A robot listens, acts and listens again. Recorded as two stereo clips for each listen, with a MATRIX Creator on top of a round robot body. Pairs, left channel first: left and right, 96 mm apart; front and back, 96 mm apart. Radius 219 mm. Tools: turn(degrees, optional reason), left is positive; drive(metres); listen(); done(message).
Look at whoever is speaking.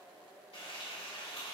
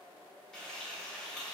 listen()
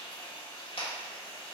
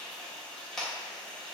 listen()
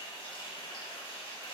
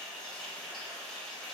done("I can't make out anyone speaking, only frying.")